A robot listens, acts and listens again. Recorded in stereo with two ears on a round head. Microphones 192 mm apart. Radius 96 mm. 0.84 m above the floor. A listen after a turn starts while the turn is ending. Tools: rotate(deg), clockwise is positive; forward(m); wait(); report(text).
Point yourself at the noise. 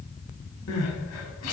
rotate(-90)
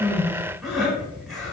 report("Found it: crying, straight ahead.")